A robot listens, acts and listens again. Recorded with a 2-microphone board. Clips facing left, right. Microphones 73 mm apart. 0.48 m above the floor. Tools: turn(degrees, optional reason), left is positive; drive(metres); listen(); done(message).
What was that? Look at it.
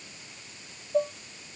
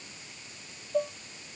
turn(degrees=30)
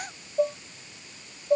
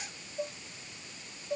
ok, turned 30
turn(degrees=145, reason="So it is at 145° left.")
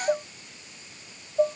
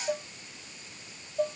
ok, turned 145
turn(degrees=20, reason="The dishes clattering is now 20° left.")
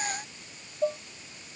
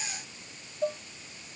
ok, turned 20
done("Found it: dishes clattering, straight ahead.")